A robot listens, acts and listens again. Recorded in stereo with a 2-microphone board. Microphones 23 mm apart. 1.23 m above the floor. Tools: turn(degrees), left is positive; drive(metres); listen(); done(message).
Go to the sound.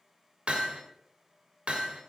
turn(degrees=-55)
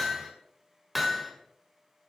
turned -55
drive(metres=1.0)
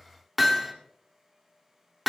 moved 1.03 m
drive(metres=1.0)
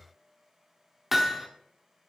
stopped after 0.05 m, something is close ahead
done("I am next to the hammering.")